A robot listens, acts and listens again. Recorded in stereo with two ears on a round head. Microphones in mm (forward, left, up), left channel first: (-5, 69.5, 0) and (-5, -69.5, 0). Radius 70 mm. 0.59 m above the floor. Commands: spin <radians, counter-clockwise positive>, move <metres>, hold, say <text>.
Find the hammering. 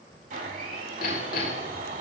spin 1.05
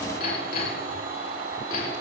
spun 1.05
spin 1.05
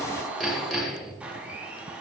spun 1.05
say Found it: hammering, straight ahead, over 4 m away.